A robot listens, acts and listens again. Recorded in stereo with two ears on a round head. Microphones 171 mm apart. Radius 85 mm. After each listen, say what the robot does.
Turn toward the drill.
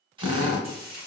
Turn 25° right.
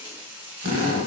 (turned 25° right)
Turn 130° right.
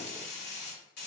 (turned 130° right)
Keep listening.
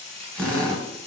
Facing the drill.